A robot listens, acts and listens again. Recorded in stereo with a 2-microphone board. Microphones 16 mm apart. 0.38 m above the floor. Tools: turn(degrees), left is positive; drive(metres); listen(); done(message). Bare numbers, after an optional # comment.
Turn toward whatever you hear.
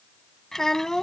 # The child speaking: about 35° left or 145° left.
turn(35)
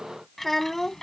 # So it is at 20° left.
turn(20)
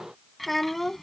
# The child speaking is now 10° left.
turn(10)
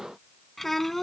# The child speaking is now 15° left.
turn(15)
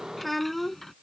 # The child speaking is now 10° left.
turn(10)
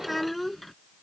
done("Found it: a child speaking, straight ahead.")